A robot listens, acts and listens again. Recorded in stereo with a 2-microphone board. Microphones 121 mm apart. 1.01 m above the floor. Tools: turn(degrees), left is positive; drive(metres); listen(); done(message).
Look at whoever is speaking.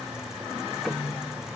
listen()
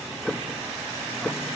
listen()
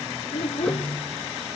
turn(degrees=60)
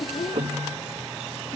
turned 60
turn(degrees=55)
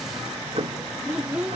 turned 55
turn(degrees=-10)
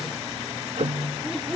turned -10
done("Found it: a child speaking, straight ahead, under 1 m away.")